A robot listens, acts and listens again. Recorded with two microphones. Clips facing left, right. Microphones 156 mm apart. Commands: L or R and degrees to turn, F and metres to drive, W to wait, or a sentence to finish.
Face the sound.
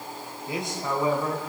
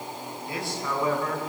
L15
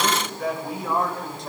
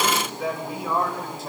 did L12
R30
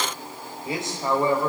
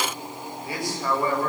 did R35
L20
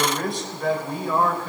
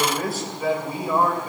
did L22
R10
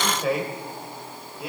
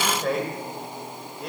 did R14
Found it: a man speaking, straight ahead, over 4 m away.